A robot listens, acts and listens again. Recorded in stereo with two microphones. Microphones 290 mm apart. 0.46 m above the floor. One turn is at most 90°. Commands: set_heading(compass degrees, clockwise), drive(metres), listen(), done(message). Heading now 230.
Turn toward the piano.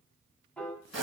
set_heading(200)
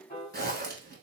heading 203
set_heading(113)
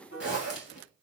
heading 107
set_heading(52)
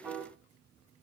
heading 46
done("Found it: a piano, straight ahead.")